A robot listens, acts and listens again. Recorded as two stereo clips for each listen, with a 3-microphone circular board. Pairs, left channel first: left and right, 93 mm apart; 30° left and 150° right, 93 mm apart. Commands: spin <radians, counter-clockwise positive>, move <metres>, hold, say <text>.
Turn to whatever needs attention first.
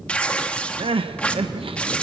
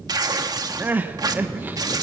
spin -1.40
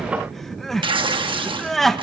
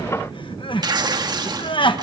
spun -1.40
say Found it: crying, straight ahead, 1 to 2 m away.